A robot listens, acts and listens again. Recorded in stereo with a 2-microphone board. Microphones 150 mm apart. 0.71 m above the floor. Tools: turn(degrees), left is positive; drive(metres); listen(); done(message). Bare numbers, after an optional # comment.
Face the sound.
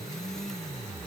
listen()
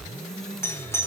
# The doorbell: about 15° left or 165° left.
turn(15)
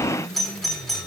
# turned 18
done("Found it: a doorbell, straight ahead, 2 to 4 m away.")